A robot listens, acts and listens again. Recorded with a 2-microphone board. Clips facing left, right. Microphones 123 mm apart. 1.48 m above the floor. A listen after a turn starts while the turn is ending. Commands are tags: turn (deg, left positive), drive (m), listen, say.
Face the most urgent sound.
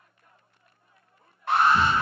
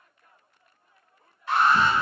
<turn deg="60"/>
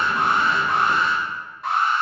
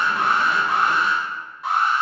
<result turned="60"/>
<say>Found it: an alarm, straight ahead, 1 to 2 m away.</say>